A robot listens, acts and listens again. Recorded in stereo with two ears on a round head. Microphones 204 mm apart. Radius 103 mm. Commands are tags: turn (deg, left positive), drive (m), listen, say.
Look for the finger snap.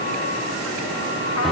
<listen/>
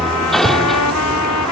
<listen/>
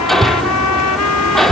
<say>I can't make out a finger snap to turn to.</say>